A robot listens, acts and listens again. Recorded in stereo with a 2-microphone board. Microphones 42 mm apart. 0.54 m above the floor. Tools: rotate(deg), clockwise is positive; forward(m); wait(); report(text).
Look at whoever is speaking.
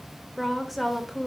rotate(-30)
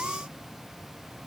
wait()
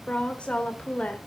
rotate(-150)
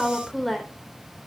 report("Found it: a woman speaking, straight ahead, 1 to 2 m away.")